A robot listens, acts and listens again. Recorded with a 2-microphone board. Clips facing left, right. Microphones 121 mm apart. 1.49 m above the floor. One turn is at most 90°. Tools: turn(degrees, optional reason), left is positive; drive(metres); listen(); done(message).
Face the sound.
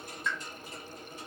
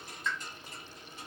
turn(degrees=30)
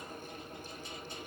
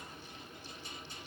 listen()
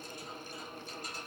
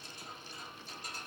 done("I heard a pop, but can't make it out now. It was about 20° right or 140° left.")